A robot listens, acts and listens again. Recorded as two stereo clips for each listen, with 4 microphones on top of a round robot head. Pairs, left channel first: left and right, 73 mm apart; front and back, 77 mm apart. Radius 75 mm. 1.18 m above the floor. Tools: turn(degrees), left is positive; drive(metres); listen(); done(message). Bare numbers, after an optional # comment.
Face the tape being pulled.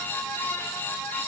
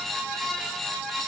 listen()
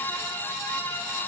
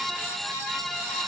listen()
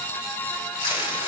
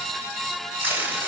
# The tape being pulled: 120° left.
turn(120)
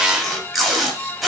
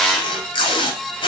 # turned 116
done("Facing the tape being pulled.")